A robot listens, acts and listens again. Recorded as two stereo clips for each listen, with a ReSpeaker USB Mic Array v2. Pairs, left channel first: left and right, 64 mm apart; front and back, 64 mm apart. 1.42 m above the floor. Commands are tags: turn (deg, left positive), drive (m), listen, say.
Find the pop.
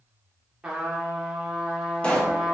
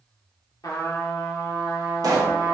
<turn deg="160"/>
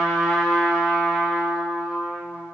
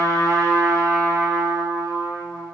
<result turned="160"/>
<say>Facing where the pop came from. I can't hear it now.</say>